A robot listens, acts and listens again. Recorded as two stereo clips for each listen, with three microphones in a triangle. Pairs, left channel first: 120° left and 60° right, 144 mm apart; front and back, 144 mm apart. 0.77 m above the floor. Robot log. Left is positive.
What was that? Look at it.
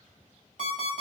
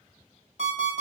note: The alarm clock: 40° right.
cmd yaw -40
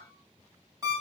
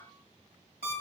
end: Found it: an alarm clock, straight ahead, 2 to 4 m away.